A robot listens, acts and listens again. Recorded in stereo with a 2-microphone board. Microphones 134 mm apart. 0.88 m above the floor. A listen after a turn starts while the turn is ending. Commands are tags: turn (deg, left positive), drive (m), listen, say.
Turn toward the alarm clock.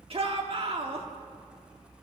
<listen/>
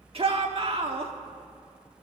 <listen/>
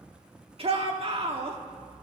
<say>I can't make out an alarm clock, only a shout.</say>